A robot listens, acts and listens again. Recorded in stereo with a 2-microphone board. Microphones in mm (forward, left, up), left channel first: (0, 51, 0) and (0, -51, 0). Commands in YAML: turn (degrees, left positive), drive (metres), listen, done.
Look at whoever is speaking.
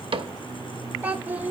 turn: -20
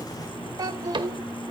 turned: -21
turn: -140
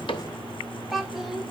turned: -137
done: "Facing the child speaking, under 1 m away."